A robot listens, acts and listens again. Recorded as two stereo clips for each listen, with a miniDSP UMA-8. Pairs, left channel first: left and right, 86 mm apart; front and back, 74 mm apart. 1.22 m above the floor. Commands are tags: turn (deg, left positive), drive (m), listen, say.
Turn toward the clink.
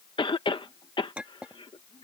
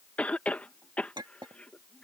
<turn deg="-170"/>
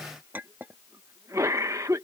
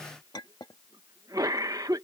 <turn deg="-25"/>
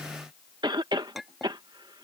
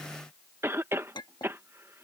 <say>Found it: a clink, straight ahead.</say>